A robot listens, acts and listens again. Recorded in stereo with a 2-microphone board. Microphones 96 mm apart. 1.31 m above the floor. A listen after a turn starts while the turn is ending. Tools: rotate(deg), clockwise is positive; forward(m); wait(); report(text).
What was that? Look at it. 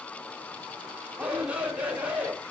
rotate(30)
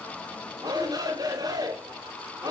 rotate(135)
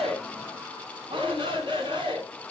rotate(60)
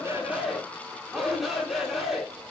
report("Found it: a shout, straight ahead, over 4 m away.")